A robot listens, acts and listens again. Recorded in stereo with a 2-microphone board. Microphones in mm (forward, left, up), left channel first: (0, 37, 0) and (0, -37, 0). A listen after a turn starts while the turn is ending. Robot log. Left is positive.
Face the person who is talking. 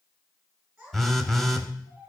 cmd yaw -30
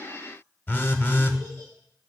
cmd idle
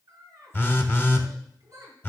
note: So it is at 135° right.
cmd yaw -135
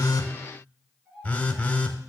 note: The child speaking is now 15° right.
cmd yaw -15
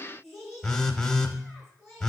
end: Facing the child speaking, over 4 m away.